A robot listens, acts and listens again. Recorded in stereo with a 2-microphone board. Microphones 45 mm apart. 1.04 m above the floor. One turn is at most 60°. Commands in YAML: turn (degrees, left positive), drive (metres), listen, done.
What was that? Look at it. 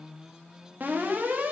turn: -45
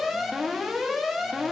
done: "Facing the alarm."